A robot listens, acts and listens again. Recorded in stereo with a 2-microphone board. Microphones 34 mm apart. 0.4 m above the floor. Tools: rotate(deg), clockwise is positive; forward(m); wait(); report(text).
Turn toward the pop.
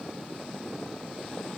wait()
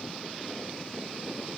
wait()
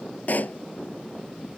rotate(-55)
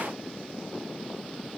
wait()
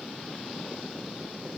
report("I heard a pop, but can't make it out now. It was about straight ahead or 70° left.")